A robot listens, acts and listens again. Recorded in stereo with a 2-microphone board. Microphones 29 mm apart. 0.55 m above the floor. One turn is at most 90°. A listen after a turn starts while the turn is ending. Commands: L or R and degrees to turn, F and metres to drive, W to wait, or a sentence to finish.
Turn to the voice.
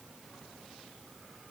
W
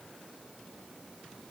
W
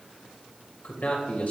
L65
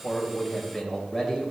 L15
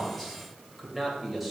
Found it: a man speaking, straight ahead, 2 to 4 m away.